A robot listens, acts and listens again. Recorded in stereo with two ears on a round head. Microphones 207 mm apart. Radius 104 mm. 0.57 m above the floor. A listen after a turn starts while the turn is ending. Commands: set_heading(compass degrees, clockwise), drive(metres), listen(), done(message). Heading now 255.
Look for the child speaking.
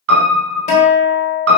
listen()
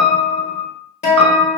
listen()
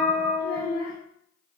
set_heading(205)
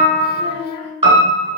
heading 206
set_heading(126)
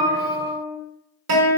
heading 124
listen()
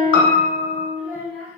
done("Found it: a child speaking, straight ahead.")